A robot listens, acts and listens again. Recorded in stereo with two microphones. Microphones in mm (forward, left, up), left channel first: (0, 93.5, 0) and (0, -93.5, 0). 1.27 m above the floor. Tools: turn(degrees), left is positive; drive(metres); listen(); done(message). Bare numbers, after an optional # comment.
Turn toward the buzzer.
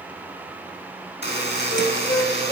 # The buzzer: about 65° left or 115° left.
turn(65)
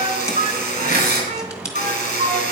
# So it is at 45° left.
turn(45)
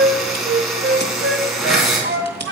done("Facing the buzzer, 2 to 4 m away.")